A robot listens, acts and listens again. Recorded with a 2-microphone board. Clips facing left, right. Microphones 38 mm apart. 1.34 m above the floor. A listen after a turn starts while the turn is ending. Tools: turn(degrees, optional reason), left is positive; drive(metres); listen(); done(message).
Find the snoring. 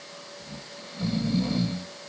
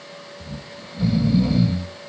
turn(degrees=-30)
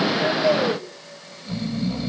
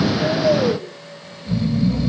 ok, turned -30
turn(degrees=15, reason="So it is at 15° left.")
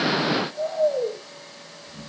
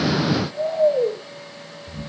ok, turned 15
done("Facing the snoring.")